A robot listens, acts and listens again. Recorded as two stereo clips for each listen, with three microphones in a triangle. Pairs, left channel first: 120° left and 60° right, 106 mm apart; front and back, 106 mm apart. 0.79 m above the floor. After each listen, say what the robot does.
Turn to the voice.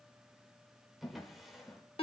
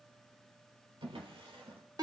Keep listening.
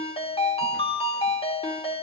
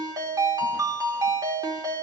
Keep listening.
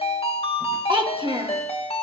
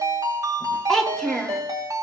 Turn 85° right.
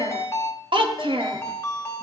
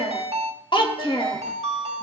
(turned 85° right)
Turn 30° right.
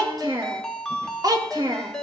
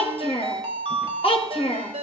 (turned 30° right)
Turn 10° right.
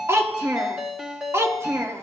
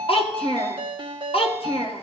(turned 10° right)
Found it: a child speaking, straight ahead.